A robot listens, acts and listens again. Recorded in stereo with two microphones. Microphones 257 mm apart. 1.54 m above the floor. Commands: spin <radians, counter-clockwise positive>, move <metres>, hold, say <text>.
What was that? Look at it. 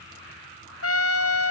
spin 1.13
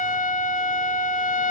spin 0.61
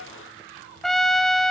say Facing the trumpet.